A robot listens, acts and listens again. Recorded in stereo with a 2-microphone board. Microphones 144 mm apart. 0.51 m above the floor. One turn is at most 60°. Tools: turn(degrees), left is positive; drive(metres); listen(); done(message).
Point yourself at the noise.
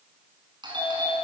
turn(degrees=-35)
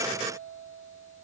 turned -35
listen()
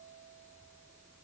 listen()
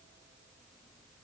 done("I heard a doorbell, but can't make it out now. It was about straight ahead or 110° right.")